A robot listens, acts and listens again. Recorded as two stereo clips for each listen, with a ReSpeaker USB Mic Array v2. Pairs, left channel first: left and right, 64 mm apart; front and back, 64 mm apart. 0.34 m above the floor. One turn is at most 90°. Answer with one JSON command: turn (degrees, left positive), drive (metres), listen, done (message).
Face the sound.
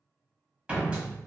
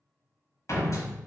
{"turn": -20}
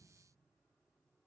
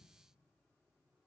{"done": "I heard a door slam from this way, but can't make it out now."}